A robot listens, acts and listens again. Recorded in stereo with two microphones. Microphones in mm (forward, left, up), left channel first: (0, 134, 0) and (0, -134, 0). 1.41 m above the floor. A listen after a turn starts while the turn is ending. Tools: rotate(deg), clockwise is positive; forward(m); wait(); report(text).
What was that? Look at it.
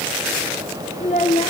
rotate(-25)
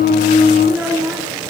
report("Found it: a child speaking, straight ahead.")